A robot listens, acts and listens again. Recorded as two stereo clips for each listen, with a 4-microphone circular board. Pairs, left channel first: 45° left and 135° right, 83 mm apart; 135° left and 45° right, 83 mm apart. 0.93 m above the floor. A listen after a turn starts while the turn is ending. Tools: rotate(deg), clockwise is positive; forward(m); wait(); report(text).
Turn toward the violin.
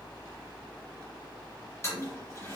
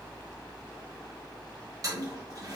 wait()
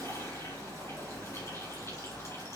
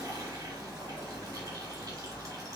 wait()
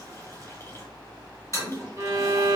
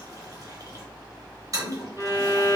rotate(95)
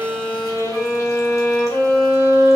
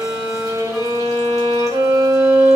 report("Facing the violin, 1 to 2 m away.")